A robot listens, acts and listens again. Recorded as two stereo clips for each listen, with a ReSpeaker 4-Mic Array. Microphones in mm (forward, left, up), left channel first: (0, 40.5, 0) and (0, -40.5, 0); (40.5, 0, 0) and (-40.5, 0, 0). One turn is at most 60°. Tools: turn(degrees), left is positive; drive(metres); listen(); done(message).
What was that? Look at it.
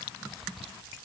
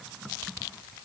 listen()
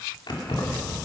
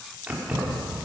turn(degrees=60)
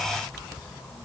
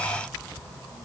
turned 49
turn(degrees=60)
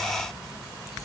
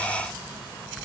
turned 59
listen()
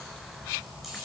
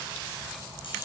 done("Found it: keys jangling, straight ahead, over 4 m away.")